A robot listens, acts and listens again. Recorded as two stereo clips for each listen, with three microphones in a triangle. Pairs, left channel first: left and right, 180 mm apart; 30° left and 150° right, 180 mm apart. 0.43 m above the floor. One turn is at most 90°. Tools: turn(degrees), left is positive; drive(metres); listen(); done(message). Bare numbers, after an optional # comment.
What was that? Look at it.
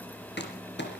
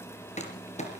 # The crumpling: 80° left.
turn(80)
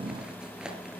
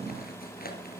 listen()
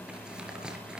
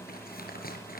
listen()
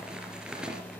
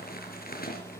done("Facing the crumpling.")